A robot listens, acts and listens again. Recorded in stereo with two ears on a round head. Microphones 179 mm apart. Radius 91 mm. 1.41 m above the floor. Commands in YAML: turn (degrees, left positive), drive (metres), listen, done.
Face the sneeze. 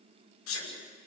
turn: 90
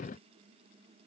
done: "Facing where the sneeze came from. I can't hear it now."